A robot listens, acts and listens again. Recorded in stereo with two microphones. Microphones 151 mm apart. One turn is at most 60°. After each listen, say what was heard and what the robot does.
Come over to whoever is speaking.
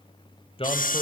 The man speaking: about 40° left or 140° left. Turn 40° left.
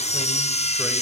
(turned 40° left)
Keep listening.
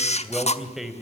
Drive 1.0 m forward.
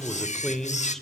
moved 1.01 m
Drive 1.0 m forward.
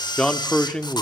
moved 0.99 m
Drive 1.0 m forward.
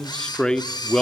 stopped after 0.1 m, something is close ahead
Arrived at the man speaking, straight ahead.